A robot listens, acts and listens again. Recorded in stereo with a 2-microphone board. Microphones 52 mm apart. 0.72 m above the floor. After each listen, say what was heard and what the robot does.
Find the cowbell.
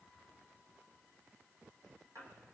Keep listening.
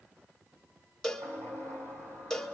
Turn 30° left.
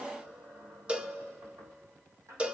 So it is at 20° right. Turn 20° right.
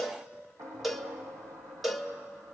Found it: a cowbell, straight ahead, 1 to 2 m away.